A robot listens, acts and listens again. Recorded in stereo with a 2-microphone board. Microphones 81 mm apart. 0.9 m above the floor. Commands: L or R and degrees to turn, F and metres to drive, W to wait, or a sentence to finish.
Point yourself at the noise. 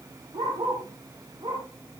R90
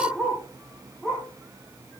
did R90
Found it: a dog barking, straight ahead.